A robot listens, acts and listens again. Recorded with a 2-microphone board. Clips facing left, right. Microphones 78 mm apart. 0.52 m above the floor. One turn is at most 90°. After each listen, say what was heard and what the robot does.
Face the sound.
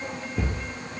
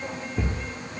Turn 30° left.
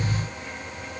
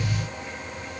Keep listening.
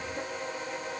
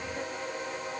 I heard a thud, but can't make it out now. It was about 25° right or 145° left.